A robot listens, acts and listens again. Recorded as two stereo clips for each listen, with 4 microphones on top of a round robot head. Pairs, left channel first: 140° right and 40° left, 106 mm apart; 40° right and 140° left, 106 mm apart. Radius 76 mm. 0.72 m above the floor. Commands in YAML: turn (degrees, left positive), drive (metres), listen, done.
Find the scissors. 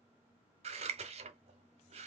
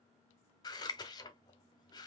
turn: 15
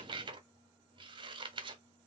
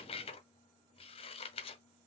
done: "Found it: scissors, straight ahead, under 1 m away."